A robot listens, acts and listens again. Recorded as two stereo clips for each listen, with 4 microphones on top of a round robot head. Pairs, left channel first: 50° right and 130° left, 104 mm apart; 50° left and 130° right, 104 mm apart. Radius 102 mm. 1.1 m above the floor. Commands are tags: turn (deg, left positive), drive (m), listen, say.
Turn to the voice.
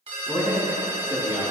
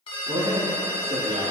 <turn deg="-160"/>
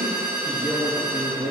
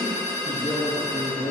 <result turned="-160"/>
<turn deg="25"/>
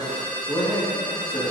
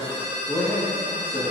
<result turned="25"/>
<say>Found it: a man speaking, straight ahead.</say>